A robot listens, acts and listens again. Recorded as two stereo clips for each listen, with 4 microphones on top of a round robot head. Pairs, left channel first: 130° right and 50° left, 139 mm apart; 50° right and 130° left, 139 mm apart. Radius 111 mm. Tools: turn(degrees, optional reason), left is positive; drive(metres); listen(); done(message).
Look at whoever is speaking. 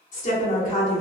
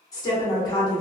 turn(degrees=-110, reason="The woman speaking: 110° right.")
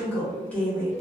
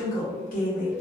turn(degrees=-55, reason="The woman speaking is now 55° right.")
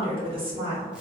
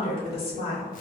done("Found it: a woman speaking, straight ahead, 1 to 2 m away.")